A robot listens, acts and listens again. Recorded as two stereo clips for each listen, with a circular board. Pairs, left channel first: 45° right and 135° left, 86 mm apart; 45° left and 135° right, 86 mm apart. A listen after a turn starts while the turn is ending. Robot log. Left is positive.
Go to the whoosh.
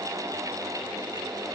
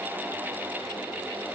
cmd idle
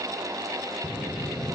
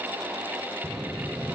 note: The whoosh: 90° right.
cmd yaw -90
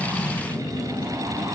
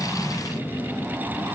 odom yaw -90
note: The whoosh is now 20° right.
cmd yaw -20
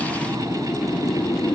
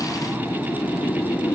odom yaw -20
cmd fwd 1.0
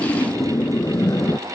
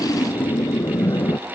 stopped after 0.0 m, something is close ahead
end: Something is in my way. I am facing the whoosh but have not reached it.